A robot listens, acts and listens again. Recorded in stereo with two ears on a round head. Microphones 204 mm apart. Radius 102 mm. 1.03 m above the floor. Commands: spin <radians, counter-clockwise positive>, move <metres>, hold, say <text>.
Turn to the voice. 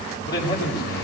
spin 0.35
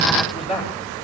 say Facing the man speaking, over 4 m away.